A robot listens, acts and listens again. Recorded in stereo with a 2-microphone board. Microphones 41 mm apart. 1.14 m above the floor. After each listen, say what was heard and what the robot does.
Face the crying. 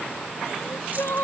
Turn 90° left.
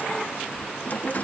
Keep listening.
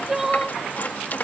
The crying is now 10° right. Turn 10° right.
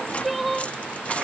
Found it: crying, straight ahead.